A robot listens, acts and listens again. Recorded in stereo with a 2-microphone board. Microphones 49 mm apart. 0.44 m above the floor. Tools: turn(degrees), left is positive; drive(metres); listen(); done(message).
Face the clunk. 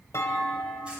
turn(degrees=90)
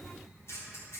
done("I heard a clunk from this way, but can't make it out now.")